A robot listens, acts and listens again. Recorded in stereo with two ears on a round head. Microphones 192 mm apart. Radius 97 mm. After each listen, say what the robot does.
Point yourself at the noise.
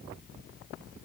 Keep listening.
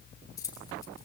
Turn 15° left.
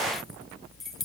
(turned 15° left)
Facing the keys jangling.